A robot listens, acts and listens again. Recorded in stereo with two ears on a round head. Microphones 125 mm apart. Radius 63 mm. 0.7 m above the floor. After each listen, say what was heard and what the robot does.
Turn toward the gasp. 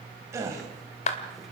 The gasp: about 25° right or 155° right. Turn 25° right.
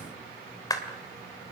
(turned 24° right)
Keep listening.
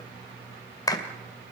I heard a gasp, but can't make it out now. It was about straight ahead or 135° right.